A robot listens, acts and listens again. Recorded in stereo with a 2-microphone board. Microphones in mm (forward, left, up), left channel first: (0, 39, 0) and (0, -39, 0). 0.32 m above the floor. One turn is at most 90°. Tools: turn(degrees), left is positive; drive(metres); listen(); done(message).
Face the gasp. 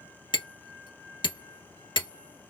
listen()
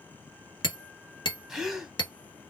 turn(degrees=-30)
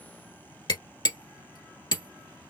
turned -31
listen()
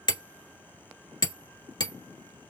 done("I heard a gasp, but can't make it out now. It was about 25° left or 145° right.")